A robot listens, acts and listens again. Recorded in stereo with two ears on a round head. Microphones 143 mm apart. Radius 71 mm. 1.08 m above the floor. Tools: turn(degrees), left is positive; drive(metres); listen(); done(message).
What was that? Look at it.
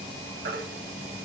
turn(degrees=-60)
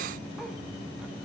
listen()
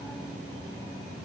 listen()
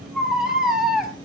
done("Found it: a baby crying, straight ahead.")